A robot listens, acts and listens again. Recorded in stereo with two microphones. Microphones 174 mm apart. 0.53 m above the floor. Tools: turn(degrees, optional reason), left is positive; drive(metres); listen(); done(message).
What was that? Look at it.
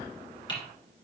turn(degrees=25, reason="The typing on a keyboard: about 25° left or 155° left.")
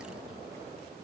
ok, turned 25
listen()
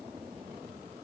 listen()
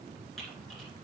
done("I heard typing on a keyboard, but can't make it out now. It was about straight ahead or 130° left.")